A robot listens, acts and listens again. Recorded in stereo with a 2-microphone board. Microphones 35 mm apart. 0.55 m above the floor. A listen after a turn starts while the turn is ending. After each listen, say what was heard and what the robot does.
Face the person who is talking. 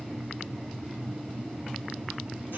Keep listening.
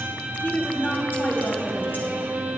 The woman speaking: about 60° left or 120° left. Turn 60° left.
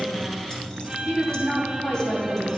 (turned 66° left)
So it is at 50° left. Turn 50° left.
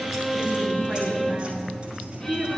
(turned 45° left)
Facing the woman speaking, 2 to 4 m away.